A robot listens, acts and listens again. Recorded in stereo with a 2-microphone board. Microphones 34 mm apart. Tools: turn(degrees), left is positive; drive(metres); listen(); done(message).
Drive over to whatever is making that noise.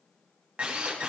turn(degrees=-40)
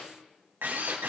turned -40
turn(degrees=-100)
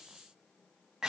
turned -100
turn(degrees=-20)
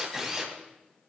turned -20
turn(degrees=-10)
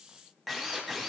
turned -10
drive(metres=1.0)
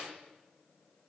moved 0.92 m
listen()
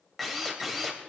drive(metres=1.0)
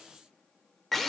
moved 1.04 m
drive(metres=1.0)
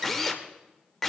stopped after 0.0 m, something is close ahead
done("I am next to the drill.")